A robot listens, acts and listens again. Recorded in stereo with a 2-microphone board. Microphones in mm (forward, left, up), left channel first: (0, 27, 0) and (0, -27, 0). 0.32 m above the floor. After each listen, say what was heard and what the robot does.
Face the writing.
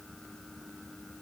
Keep listening.
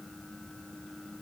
Keep listening.
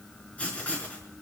The writing: about 20° left or 160° left. Turn 20° left.
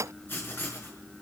So it is at 140° left. Turn 140° left.
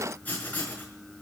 The writing is now 30° left. Turn 30° left.
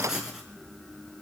Found it: writing, straight ahead.